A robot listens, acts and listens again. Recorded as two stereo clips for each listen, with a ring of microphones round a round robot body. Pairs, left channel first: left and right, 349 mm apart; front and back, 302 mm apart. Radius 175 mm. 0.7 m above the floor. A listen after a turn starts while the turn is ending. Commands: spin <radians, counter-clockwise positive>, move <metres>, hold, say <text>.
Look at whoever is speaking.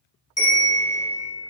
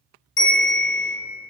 hold
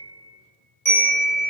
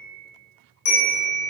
hold
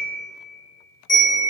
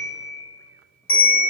say I can't make out anyone speaking, only a bell.